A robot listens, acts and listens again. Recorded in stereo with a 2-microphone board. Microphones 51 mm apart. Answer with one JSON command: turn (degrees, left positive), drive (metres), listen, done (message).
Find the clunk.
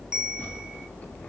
{"listen": true}
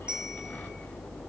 {"listen": true}
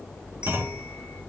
{"turn": -45}
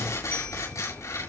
{"listen": true}
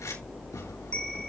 {"done": "I heard a clunk, but can't make it out now. It was about straight ahead or 90° right."}